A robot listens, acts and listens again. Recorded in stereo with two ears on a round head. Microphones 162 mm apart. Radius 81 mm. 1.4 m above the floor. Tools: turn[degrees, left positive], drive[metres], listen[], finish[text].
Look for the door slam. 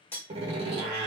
Thought: The door slam: about 35° right or 145° right.
Action: turn[-35]
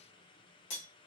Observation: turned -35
Action: listen[]
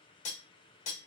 Action: finish[I heard a door slam, but can't make it out now. It was about straight ahead or 110° right.]